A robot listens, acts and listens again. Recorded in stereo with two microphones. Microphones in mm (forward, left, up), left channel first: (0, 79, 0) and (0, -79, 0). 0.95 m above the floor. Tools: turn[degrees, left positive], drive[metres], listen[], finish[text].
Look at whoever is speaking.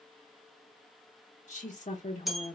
Thought: The woman speaking: about 55° left or 125° left.
Action: turn[55]
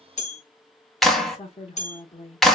Thought: So it is at 55° left.
Action: turn[55]
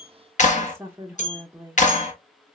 Thought: The woman speaking is now 15° right.
Action: turn[-15]
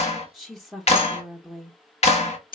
Action: finish[Found it: a woman speaking, straight ahead, under 1 m away.]